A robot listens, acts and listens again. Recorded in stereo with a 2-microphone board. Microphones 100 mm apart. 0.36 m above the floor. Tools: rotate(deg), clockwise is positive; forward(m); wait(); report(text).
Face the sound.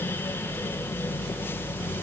wait()
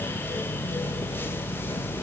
wait()
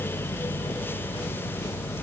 report("I can't make out anything.")